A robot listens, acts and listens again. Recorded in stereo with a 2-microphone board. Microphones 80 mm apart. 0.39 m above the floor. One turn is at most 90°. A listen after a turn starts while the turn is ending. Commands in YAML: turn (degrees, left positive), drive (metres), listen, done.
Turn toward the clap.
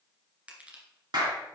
turn: -60
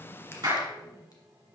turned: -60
turn: -55
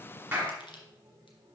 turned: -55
listen: true
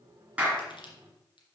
turn: -15
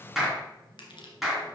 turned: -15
done: "Found it: a clap, straight ahead, 2 to 4 m away."